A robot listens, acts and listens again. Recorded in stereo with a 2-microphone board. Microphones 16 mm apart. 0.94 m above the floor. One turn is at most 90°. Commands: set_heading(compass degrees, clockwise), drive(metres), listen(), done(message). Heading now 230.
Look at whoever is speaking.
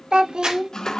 set_heading(295)
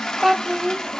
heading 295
set_heading(345)
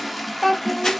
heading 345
done("Facing the child speaking.")